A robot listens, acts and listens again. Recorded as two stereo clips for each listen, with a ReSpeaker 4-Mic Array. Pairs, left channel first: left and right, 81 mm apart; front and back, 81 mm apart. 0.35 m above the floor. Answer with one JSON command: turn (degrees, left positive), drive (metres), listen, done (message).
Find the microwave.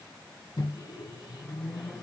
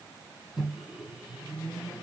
{"turn": 90}
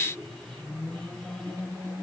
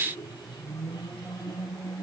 {"done": "Facing the microwave."}